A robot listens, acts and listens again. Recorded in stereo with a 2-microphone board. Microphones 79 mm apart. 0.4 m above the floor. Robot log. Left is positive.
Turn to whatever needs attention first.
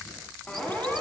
cmd yaw +30
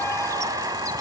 cmd idle
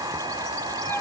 note: So it is at 145° left.
cmd yaw +145
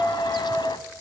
note: The siren is now 20° left.
cmd yaw +20
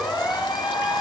end: Facing the siren.